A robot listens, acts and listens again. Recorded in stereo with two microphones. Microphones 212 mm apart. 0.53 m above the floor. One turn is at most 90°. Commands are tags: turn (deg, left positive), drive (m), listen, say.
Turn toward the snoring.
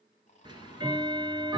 <turn deg="35"/>
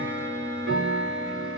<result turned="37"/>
<listen/>
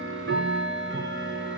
<listen/>
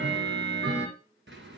<say>I heard snoring, but can't make it out now. It was about 5° right or 110° left.</say>